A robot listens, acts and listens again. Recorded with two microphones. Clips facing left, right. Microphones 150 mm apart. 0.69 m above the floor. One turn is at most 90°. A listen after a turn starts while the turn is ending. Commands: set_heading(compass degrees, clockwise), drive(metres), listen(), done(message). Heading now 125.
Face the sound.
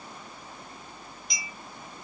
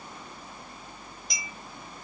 set_heading(170)
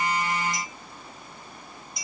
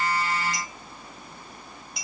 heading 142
set_heading(232)
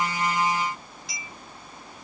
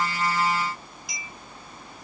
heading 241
set_heading(256)
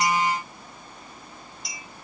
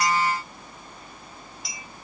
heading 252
done("Facing the clink.")